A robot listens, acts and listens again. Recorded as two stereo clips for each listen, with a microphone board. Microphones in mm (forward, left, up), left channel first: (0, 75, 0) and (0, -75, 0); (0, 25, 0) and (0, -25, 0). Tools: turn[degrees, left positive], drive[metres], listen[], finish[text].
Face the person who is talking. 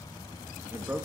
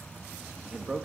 Action: turn[-30]
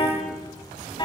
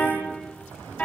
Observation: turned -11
Action: listen[]
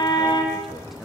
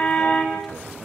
Action: listen[]
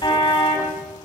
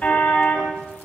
Action: finish[I heard a man speaking, but can't make it out now. It was about 5° right or 155° right.]